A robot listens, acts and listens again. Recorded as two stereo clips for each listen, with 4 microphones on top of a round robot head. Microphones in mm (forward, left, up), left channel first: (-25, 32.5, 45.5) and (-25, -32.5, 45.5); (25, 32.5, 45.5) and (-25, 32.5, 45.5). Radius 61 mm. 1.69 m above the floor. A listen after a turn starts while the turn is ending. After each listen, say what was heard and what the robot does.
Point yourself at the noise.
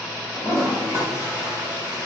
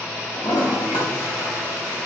The toilet flushing: 25° right. Turn 25° right.
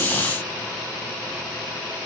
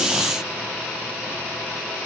Keep listening.
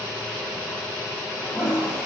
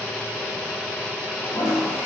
Facing the toilet flushing.